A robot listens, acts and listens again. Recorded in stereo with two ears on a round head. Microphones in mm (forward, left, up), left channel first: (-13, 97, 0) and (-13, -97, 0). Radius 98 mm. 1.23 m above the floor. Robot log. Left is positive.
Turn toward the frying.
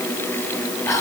cmd idle
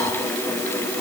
cmd idle
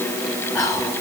end: I can't make out frying, only whispering.